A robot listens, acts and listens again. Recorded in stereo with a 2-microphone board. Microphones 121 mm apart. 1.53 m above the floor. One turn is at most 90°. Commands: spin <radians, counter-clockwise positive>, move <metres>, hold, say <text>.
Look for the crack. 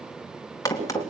spin 0.44
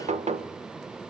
hold
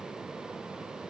say I heard a crack, but can't make it out now. It was about straight ahead or 130° left.